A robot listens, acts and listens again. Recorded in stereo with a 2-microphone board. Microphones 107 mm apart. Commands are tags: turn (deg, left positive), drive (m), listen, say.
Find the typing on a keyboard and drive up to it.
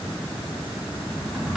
<turn deg="-30"/>
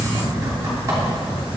<turn deg="-145"/>
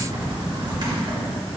<turn deg="-45"/>
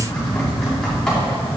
<drive m="1.0"/>
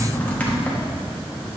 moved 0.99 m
<turn deg="15"/>
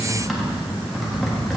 <drive m="1.0"/>
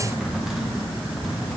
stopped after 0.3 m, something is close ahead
<say>I am next to the typing on a keyboard.</say>